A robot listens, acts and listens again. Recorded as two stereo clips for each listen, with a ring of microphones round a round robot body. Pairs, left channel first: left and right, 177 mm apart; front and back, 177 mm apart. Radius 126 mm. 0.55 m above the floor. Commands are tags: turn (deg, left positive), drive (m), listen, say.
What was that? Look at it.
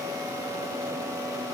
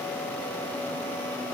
<listen/>
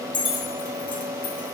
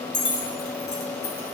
<turn deg="50"/>
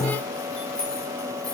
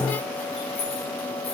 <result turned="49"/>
<listen/>
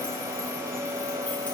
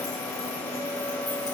<listen/>
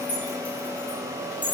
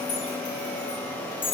<turn deg="10"/>
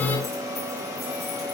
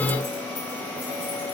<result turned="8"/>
<listen/>
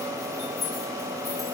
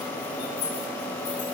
<listen/>
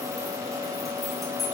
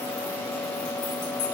<say>Facing where the keys jangling came from. I can't hear it now.</say>